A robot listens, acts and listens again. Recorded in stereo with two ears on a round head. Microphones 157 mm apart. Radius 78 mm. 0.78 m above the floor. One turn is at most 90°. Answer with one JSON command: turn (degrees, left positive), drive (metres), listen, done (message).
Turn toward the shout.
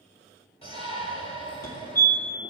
{"turn": 35}
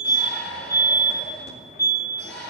{"turn": 90}
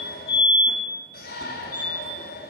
{"turn": 60}
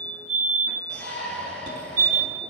{"done": "Facing the shout."}